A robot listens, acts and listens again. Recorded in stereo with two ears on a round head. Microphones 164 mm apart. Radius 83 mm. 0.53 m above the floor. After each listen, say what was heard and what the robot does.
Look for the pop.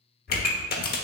The pop: about 55° left or 125° left. Turn 55° left.
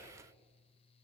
Keep listening.
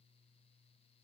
I heard a pop, but can't make it out now. It was about straight ahead or 70° left.